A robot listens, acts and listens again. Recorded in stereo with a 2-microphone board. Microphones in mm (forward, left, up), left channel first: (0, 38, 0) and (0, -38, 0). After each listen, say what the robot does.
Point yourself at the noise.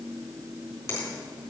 Keep listening.
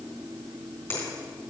Turn 35° left.
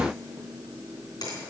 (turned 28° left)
Keep listening.
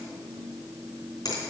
Turn 115° left.
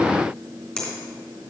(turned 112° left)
Found it: a finger snap, straight ahead, 2 to 4 m away.